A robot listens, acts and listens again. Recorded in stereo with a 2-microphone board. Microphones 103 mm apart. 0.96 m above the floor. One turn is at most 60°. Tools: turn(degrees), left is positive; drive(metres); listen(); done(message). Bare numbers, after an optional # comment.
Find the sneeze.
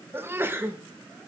# The sneeze: about 25° right or 155° right.
turn(-25)
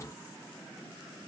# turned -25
listen()
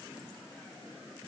done("I heard a sneeze, but can't make it out now. It was about straight ahead or 130° right.")